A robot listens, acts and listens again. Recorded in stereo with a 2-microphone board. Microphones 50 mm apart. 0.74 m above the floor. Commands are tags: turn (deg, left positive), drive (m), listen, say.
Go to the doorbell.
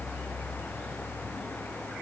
<listen/>
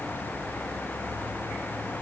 <listen/>
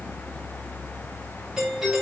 <turn deg="-30"/>
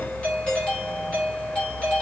<turn deg="25"/>
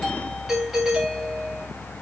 <drive m="1.0"/>
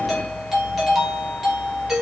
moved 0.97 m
<drive m="1.0"/>
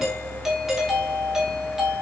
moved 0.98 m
<turn deg="-10"/>
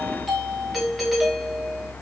<drive m="1.0"/>
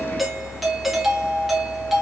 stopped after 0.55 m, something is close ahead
<say>I am next to the doorbell.</say>